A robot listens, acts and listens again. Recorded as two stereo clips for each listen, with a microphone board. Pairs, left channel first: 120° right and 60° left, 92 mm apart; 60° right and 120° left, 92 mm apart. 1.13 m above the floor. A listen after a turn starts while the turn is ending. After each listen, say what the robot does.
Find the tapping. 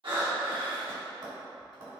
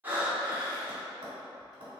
Turn 95° left.
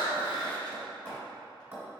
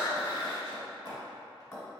Facing the tapping, 1 to 2 m away.